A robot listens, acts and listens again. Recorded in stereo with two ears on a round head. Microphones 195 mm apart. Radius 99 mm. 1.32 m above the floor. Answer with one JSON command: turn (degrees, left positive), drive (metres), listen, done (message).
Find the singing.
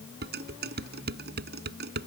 {"listen": true}
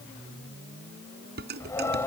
{"turn": 30}
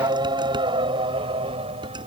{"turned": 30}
{"turn": -30}
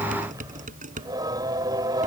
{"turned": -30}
{"turn": -20}
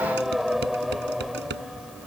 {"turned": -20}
{"done": "Facing the singing."}